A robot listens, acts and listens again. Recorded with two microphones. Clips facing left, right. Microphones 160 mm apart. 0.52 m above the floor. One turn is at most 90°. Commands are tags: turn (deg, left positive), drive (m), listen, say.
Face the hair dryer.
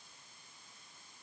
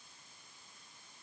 <listen/>
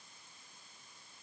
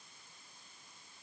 <listen/>
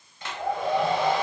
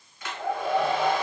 <turn deg="30"/>
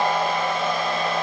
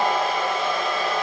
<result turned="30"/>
<say>Facing the hair dryer, 1 to 2 m away.</say>